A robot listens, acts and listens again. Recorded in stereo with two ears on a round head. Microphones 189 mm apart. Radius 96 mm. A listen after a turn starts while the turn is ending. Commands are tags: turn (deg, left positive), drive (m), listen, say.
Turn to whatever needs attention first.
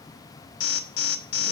<turn deg="70"/>
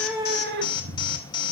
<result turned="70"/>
<turn deg="25"/>
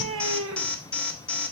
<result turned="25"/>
<say>Facing the alarm.</say>